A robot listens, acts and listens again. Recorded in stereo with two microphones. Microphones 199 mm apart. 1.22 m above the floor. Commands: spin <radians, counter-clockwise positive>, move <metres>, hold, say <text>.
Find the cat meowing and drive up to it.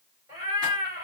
spin -0.35
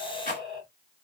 move 1.0
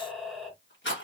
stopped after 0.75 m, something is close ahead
say Arrived at the cat meowing, straight ahead.